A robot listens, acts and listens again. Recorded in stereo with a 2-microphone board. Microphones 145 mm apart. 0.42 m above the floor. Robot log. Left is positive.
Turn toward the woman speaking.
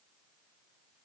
cmd idle
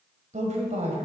note: The woman speaking: about 50° right or 130° right.
cmd yaw -50
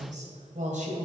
note: So it is at 60° right.
cmd yaw -60
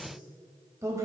note: The woman speaking is now 20° right.
cmd yaw -20
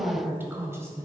note: The woman speaking is now 20° right.
cmd yaw -20
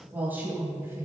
note: The woman speaking is now 15° right.
cmd yaw -15
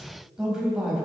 end: Facing the woman speaking.